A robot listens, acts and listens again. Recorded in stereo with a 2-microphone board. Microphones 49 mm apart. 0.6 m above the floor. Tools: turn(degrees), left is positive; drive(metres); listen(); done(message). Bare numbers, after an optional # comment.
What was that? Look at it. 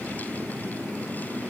listen()
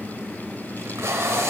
turn(-90)
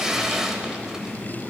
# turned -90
# So it is at 10° right.
turn(-10)
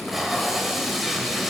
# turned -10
done("Found it: tape being pulled, straight ahead.")